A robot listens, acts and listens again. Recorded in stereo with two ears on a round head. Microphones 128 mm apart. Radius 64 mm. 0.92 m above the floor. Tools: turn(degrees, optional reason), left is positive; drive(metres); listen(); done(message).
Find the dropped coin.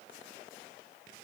listen()
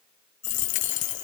turn(degrees=55, reason="The dropped coin: about 55° left or 125° left.")
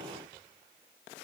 listen()
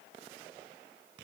done("I heard a dropped coin, but can't make it out now. It was about straight ahead or 70° left.")